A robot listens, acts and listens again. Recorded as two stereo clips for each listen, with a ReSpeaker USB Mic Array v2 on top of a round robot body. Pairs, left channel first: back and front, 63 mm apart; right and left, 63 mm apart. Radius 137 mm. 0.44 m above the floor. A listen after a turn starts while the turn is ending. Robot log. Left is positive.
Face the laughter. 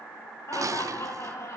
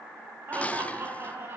note: The laughter: 140° left.
cmd yaw +140
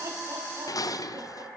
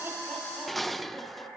cmd idle
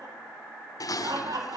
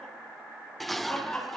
note: The laughter is now 15° right.
cmd yaw -15
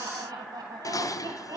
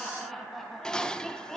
end: Facing the laughter.